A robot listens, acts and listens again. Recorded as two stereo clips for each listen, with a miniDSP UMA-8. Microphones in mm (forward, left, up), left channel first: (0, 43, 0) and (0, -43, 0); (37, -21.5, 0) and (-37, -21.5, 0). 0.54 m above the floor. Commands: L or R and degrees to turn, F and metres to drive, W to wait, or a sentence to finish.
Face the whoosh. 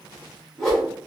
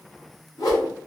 L10
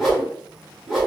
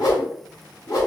Found it: a whoosh, straight ahead.